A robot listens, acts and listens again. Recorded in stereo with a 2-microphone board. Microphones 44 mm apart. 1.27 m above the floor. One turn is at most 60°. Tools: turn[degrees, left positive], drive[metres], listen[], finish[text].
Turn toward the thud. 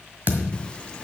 Thought: The thud: about 45° right or 135° right.
Action: turn[-45]
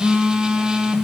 Action: listen[]
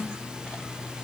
Action: finish[I heard a thud, but can't make it out now. It was about straight ahead or 90° right.]